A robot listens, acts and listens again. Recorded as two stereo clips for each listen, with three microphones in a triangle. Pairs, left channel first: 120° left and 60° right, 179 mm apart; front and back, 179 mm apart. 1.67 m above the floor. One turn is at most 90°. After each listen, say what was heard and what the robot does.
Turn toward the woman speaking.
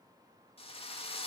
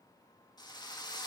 Keep listening.
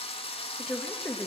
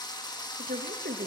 The woman speaking: 155° right. Turn 90° right.
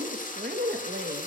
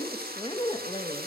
The woman speaking is now 60° right. Turn 60° right.
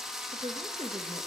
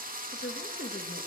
Facing the woman speaking.